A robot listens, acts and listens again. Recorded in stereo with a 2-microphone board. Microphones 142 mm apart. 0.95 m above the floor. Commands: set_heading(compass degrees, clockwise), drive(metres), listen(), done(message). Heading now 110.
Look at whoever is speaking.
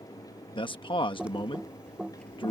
set_heading(75)
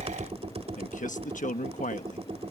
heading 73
set_heading(333)
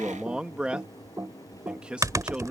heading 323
set_heading(333)
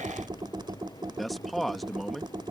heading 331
done("Found it: a man speaking, straight ahead.")